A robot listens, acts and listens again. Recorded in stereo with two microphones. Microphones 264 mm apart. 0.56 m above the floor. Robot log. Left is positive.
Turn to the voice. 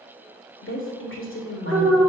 note: The woman speaking: about 50° left or 130° left.
cmd yaw +50
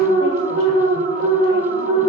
cmd idle
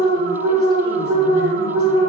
cmd idle
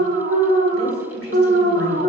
end: I heard a woman speaking, but can't make it out now. It was about straight ahead or 80° left.